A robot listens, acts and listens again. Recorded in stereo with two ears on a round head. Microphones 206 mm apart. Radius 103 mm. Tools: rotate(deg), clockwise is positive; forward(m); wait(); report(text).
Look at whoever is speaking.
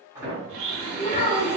rotate(-30)
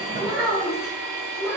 report("Facing the child speaking, 1 to 2 m away.")